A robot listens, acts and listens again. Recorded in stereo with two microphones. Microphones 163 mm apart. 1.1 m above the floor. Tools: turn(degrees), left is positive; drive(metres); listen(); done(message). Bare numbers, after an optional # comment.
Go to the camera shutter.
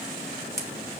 # The camera shutter: about 65° right or 115° right.
turn(-65)
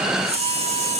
# So it is at 40° right.
turn(-40)
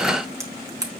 # The camera shutter is now 20° right.
turn(-20)
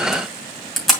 drive(1.0)
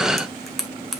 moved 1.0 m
drive(1.0)
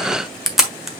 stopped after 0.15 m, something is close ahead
done("I am next to the camera shutter.")